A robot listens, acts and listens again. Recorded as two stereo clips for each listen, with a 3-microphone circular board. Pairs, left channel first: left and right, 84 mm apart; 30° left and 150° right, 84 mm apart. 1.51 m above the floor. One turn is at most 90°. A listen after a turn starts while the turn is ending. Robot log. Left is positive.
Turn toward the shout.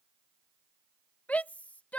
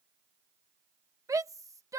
note: The shout: 165° left.
cmd yaw +90
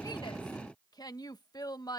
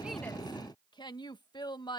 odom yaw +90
note: The shout is now 55° left.
cmd yaw +55
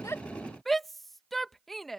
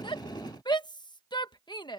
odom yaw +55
end: Found it: a shout, straight ahead.